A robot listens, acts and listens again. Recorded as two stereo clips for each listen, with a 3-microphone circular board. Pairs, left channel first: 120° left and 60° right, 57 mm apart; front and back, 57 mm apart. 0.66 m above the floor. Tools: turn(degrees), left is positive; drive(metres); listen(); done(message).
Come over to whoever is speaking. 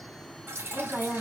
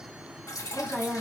turn(degrees=60)
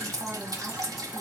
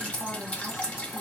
listen()
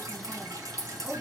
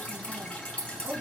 listen()
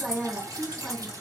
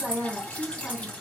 drive(metres=1.0)
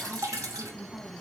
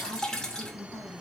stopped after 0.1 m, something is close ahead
done("Something is in my way. I am facing the woman speaking but have not reached it.")